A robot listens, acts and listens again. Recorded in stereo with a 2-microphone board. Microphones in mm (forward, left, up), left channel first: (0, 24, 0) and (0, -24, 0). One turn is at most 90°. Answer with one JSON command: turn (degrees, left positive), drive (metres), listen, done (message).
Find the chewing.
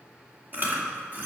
{"turn": -35}
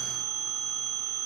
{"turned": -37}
{"listen": true}
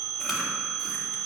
{"listen": true}
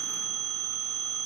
{"done": "I heard chewing, but can't make it out now. It was about straight ahead or 105° right."}